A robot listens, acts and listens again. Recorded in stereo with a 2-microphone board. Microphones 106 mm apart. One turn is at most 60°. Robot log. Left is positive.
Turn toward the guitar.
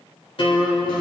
note: The guitar: about 55° left or 125° left.
cmd yaw +55
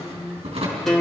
end: Facing the guitar, 2 to 4 m away.